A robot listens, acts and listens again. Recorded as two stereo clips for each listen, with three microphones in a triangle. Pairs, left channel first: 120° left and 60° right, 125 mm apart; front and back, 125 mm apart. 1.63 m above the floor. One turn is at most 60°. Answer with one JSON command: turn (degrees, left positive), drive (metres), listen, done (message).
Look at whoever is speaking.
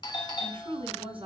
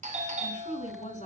{"turn": -20}
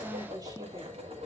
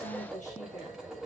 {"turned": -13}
{"listen": true}
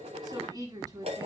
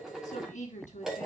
{"done": "Facing the woman speaking, over 4 m away."}